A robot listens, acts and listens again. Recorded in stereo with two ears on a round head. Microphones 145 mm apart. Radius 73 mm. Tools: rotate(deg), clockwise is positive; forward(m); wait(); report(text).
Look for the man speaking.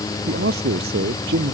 rotate(70)
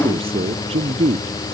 rotate(35)
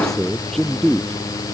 report("Facing the man speaking.")